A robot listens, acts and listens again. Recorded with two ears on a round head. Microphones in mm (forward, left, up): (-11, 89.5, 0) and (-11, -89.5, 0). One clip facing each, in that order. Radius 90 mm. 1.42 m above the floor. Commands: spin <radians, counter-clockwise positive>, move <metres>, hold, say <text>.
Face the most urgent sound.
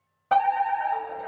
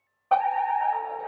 spin 0.35
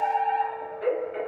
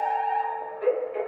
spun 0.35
say Found it: a fire alarm, straight ahead.